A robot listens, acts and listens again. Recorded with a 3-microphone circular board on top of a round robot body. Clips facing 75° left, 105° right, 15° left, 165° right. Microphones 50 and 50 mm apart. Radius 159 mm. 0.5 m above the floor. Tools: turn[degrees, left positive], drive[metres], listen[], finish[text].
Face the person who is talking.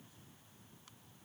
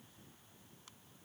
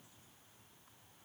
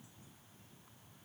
Action: listen[]
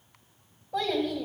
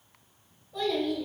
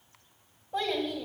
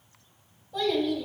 Thought: The child speaking: 70° left.
Action: turn[70]
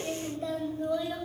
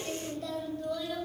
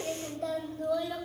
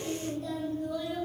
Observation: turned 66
Thought: The child speaking is now 10° left.
Action: turn[10]
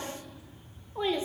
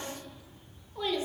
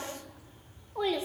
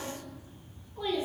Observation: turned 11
Thought: The child speaking is now 15° left.
Action: turn[15]
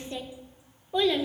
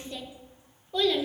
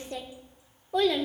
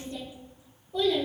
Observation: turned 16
Action: finish[Found it: a child speaking, straight ahead.]